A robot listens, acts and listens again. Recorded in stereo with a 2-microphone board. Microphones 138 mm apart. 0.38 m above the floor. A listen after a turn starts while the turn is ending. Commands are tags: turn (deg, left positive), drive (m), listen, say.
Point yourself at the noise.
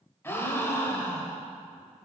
<turn deg="20"/>
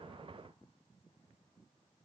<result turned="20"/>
<listen/>
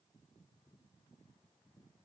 <say>I heard a gasp, but can't make it out now. It was about straight ahead or 140° left.</say>